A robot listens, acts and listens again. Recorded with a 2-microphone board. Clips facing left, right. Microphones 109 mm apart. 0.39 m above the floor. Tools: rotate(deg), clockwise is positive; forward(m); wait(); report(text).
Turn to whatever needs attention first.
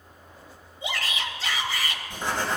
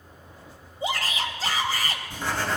rotate(40)
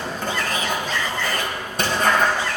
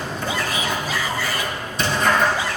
rotate(10)
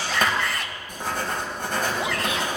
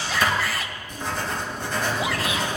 report("Facing the shout.")